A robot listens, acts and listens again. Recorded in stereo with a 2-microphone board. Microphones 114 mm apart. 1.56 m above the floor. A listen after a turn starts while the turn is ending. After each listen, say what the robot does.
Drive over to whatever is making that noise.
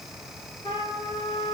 Turn 50° left.
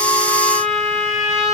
Drive 1.0 m forward.
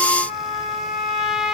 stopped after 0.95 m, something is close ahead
I am next to the trumpet.